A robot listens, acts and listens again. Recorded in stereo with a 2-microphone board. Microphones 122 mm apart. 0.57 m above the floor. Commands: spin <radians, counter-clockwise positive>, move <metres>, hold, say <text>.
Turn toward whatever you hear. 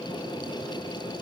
hold
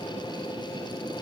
hold
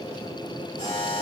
spin 1.22
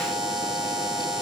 say Facing the buzzer.